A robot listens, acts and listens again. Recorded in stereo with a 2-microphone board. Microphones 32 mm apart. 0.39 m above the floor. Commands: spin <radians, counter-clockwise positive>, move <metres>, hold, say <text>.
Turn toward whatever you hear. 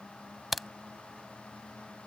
spin -0.52
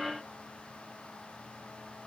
hold
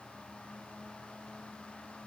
say I heard a crack, but can't make it out now. It was about 25° left or 145° right.